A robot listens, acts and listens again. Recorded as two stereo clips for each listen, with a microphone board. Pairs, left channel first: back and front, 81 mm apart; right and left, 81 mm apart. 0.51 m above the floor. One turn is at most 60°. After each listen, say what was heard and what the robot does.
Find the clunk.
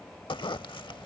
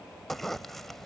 Keep listening.
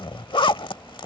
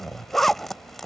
Keep listening.
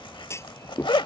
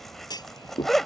The clunk: 125° right. Turn 60° right.
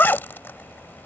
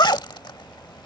Nothing new. It was at 65° right. Turn 60° right.
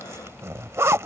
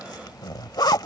Facing where the clunk came from. I can't hear it now.